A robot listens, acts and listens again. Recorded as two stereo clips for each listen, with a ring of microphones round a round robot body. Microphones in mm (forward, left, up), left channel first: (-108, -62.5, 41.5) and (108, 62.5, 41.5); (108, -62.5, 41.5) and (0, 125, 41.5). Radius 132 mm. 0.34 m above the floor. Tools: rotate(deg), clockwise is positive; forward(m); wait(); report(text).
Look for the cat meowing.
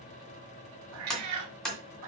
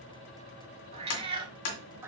rotate(-40)
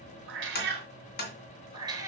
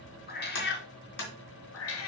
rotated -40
rotate(50)
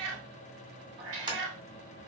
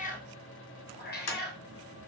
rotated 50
rotate(15)
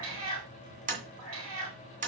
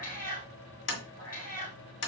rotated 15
rotate(10)
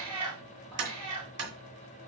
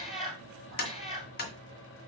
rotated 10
report("Found it: a cat meowing, straight ahead.")